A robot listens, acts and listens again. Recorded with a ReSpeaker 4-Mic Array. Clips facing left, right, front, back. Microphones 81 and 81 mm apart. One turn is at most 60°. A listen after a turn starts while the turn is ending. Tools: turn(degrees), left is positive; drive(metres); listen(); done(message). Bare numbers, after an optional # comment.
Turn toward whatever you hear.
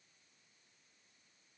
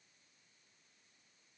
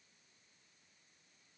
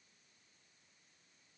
listen()
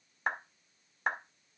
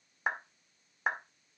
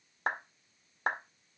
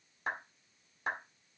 done("Found it: a clap, straight ahead, 1 to 2 m away.")